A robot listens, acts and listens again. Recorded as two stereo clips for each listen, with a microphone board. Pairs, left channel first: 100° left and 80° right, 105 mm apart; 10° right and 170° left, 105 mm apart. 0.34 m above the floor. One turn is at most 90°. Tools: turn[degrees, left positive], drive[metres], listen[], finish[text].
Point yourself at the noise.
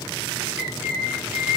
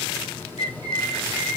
Thought: The bird: 145° right.
Action: turn[-90]
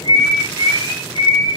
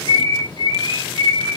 Thought: The bird is now 55° right.
Action: turn[-55]
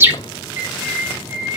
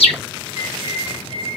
Thought: The bird is now 15° right.
Action: turn[-15]
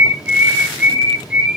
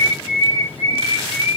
Action: finish[Facing the bird.]